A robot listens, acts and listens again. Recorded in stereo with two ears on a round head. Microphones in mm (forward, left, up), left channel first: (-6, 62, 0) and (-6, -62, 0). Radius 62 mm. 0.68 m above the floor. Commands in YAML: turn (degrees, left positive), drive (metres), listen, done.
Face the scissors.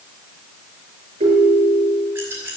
turn: -20
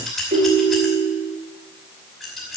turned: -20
done: "Facing the scissors, over 4 m away."